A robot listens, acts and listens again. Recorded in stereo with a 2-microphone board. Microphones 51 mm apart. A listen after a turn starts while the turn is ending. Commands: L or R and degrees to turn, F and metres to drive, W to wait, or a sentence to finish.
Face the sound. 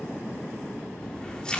L20
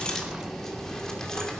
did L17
L30
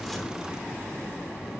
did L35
W
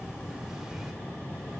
R10
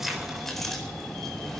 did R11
Facing the keys jangling.